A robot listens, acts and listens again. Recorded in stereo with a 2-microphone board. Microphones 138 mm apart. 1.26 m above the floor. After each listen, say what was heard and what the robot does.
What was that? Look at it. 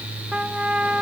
Turn 30° right.
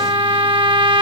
So it is at 145° right. Turn 145° right.
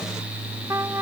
The trumpet is now 25° right. Turn 25° right.
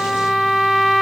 Found it: a trumpet, straight ahead.